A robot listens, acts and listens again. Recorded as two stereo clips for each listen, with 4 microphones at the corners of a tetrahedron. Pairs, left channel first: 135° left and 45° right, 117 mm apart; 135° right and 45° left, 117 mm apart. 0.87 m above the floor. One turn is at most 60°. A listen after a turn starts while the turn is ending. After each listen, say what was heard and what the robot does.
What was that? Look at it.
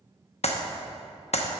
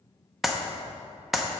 The clap: 135° left. Turn 60° left.
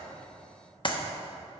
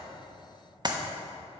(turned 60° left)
The clap is now 95° left. Turn 60° left.
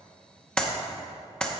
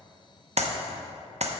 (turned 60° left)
The clap is now 50° left. Turn 50° left.
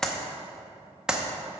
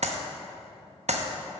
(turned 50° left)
The clap is now 40° left. Turn 40° left.
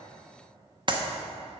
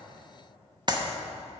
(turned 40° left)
Found it: a clap, straight ahead, under 1 m away.